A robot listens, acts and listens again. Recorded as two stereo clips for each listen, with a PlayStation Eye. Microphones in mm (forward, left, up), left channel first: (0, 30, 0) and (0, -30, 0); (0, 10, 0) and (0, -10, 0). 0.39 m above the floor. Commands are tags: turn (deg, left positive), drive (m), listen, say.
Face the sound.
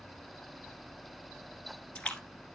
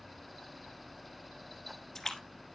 <turn deg="20"/>
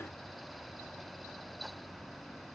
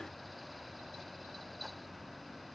<listen/>
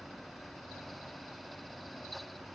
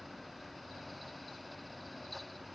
<say>I heard a splash, but can't make it out now. It was about straight ahead or 140° left.</say>